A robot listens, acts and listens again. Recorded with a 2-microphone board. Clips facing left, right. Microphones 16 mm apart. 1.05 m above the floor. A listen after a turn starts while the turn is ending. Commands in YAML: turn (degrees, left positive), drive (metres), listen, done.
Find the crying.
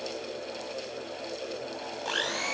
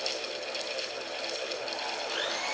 listen: true
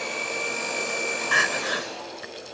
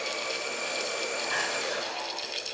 turn: 55
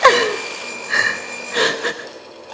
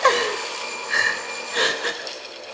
turn: 10
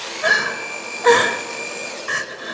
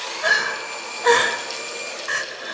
done: "Found it: crying, straight ahead."